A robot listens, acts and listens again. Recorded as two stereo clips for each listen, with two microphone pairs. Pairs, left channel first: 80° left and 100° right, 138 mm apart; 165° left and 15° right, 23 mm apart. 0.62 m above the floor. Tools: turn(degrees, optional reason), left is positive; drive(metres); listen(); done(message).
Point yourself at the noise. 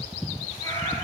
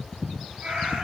turn(degrees=15, reason="The cat meowing: 15° left.")
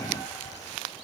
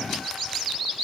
listen()
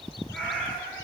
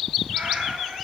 done("Found it: a cat meowing, straight ahead.")